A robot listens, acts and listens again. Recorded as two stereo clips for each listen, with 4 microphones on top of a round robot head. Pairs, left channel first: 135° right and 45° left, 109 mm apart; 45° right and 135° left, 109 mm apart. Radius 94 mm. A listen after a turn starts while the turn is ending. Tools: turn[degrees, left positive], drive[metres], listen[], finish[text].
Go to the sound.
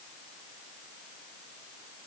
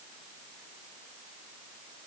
Action: listen[]
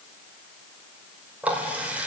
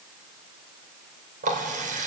Thought: The running tap: 125° left.
Action: turn[125]
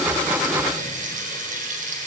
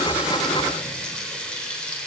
Thought: The running tap is now 35° left.
Action: turn[35]
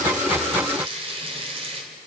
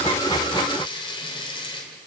Action: drive[1.0]
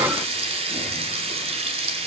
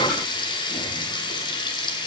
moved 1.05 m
Action: drive[1.0]
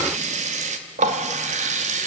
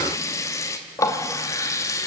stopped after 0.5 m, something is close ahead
Thought: The running tap is now 20° left.
Action: turn[20]
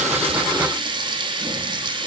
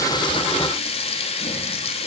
Action: finish[Arrived at the running tap, straight ahead.]